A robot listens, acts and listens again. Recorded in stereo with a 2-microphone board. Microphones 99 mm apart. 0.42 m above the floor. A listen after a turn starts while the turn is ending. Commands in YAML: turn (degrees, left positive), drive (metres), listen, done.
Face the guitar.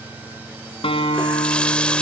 turn: 65
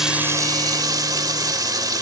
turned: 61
listen: true
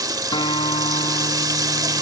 turn: 50
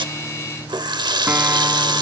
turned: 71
turn: -20
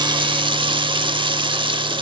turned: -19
listen: true
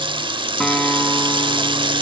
done: "I heard a guitar from this way, but can't make it out now."